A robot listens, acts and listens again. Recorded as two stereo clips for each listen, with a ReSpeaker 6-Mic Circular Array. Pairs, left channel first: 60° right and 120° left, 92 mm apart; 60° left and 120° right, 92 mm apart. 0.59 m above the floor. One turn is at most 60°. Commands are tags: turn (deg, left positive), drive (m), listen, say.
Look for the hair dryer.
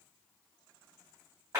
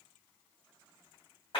<listen/>
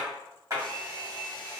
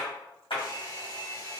<turn deg="15"/>
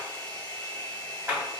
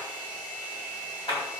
<say>Facing the hair dryer, 1 to 2 m away.</say>